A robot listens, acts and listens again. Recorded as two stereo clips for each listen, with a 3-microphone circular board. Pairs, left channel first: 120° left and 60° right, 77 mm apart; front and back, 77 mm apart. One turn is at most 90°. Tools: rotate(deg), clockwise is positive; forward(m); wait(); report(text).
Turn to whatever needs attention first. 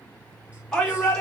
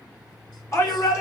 rotate(-40)
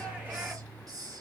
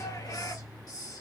wait()
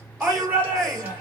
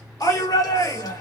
report("Facing the shout, 2 to 4 m away.")